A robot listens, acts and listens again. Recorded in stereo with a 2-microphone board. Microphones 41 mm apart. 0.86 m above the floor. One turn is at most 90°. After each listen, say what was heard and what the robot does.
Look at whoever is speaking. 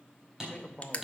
The man speaking: about 25° left or 155° left. Turn 25° left.
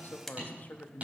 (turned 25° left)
So it is at 130° left. Turn 90° left.
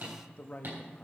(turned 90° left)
The man speaking is now 45° left. Turn 45° left.
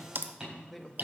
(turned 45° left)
Facing the man speaking.